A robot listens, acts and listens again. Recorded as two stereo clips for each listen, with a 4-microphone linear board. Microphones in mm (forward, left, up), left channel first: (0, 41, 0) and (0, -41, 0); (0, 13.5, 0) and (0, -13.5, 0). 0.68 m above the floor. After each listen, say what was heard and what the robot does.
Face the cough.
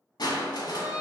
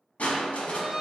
Keep listening.
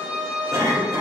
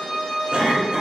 The cough: about 35° right or 145° right. Turn 35° right.
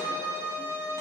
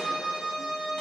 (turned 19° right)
Keep listening.
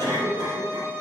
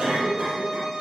So it is at 130° right. Turn 130° right.
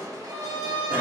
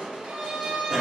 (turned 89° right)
Nothing new. It was at 40° right. Turn 40° right.
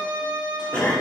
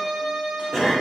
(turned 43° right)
The cough is now 15° left. Turn 15° left.
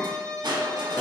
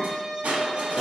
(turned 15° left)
Found it: a cough, straight ahead.